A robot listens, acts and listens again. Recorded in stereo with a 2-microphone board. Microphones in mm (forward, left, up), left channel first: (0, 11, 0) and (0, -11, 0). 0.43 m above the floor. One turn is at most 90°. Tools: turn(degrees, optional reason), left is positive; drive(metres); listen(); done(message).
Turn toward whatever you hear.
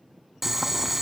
turn(degrees=-30)
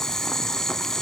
turn(degrees=20, reason="So it is at 20° left.")
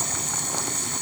done("Facing the boiling, 1 to 2 m away.")